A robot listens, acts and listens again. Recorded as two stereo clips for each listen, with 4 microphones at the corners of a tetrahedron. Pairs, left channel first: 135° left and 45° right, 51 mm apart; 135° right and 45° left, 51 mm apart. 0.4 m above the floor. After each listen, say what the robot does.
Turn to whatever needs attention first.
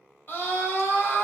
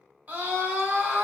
Turn 95° left.
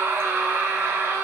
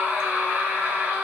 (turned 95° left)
Turn 20° right.
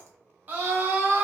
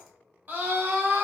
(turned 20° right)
Found it: a scream, straight ahead.